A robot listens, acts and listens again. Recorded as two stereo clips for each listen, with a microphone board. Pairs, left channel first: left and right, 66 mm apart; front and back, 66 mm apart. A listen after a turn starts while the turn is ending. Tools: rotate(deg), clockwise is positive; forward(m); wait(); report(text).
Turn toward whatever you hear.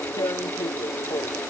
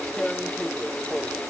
rotate(-80)
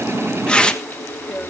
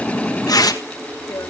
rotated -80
rotate(-15)
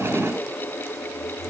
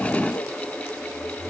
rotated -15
wait()
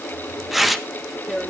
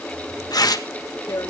report("Found it: tearing paper, straight ahead.")